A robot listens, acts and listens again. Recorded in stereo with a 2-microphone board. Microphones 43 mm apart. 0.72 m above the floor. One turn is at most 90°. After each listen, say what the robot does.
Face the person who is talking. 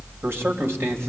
Turn 70° right.
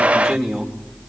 Found it: a man speaking, straight ahead, 2 to 4 m away.